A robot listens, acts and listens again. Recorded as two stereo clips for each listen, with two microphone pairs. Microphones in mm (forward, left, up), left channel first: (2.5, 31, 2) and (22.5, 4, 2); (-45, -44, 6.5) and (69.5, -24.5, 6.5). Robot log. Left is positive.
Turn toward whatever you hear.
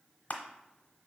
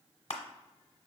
note: The crushing: 170° left.
cmd yaw +170
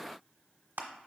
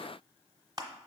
note: The crushing is now 50° right.
cmd yaw -50
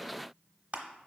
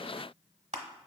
end: Facing the crushing, under 1 m away.